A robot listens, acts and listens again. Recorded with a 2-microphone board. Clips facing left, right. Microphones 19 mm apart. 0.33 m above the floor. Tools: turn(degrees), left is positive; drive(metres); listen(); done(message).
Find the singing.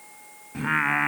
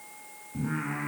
turn(degrees=60)
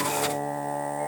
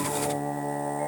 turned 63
done("Found it: singing, straight ahead, 1 to 2 m away.")